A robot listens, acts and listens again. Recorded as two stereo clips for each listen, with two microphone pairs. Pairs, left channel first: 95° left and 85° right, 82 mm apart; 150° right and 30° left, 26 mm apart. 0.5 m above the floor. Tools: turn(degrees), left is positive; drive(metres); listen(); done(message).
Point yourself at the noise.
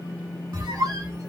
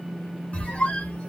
turn(degrees=-120)
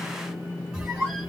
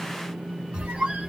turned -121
done("Found it: a squeak, straight ahead.")